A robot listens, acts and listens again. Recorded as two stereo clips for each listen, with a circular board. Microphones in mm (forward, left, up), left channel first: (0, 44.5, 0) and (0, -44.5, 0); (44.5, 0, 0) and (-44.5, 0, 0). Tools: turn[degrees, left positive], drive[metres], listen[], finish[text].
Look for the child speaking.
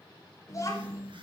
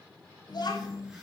Thought: The child speaking: 35° left.
Action: turn[35]
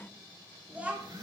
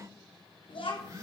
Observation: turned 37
Thought: The child speaking is now 15° right.
Action: turn[-15]
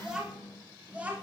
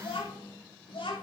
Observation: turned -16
Thought: The child speaking is now 15° right.
Action: turn[-15]
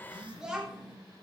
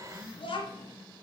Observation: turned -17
Thought: The child speaking is now 10° right.
Action: turn[-10]
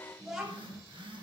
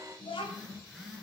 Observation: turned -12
Action: finish[Facing the child speaking, 2 to 4 m away.]